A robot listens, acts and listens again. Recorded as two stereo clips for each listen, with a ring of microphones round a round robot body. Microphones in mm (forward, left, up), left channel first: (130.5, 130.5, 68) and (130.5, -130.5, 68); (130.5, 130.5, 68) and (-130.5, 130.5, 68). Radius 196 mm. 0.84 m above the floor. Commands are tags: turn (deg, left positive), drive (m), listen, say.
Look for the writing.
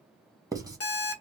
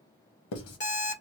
<turn deg="-15"/>
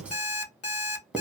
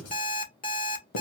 <say>Found it: writing, straight ahead, 1 to 2 m away.</say>